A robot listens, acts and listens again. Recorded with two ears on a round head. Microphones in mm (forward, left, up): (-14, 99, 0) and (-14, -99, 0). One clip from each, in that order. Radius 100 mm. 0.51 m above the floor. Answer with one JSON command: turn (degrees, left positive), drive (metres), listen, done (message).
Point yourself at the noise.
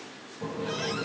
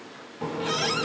{"turn": -50}
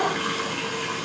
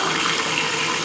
{"turn": -70}
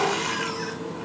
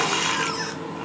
{"turn": -25}
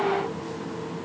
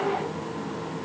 {"turn": -10}
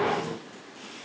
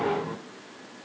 {"done": "Facing the running tap."}